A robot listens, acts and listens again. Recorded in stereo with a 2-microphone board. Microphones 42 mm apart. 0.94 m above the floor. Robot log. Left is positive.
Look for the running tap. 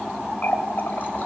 note: The running tap: about 50° left or 130° left.
cmd yaw +50
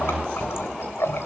note: So it is at 80° left.
cmd yaw +80
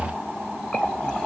note: The running tap is now 20° left.
cmd yaw +20
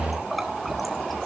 end: Found it: a running tap, straight ahead.